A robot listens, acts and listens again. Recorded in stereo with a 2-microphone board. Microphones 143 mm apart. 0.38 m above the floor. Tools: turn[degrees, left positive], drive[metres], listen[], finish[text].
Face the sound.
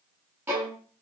Thought: The violin: about 20° right or 160° right.
Action: turn[-20]
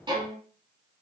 Thought: So it is at 140° right.
Action: turn[-140]
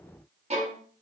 Thought: The violin is now 50° right.
Action: turn[-50]
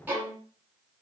Thought: The violin is now 10° right.
Action: turn[-10]
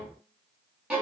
Action: finish[Found it: a violin, straight ahead.]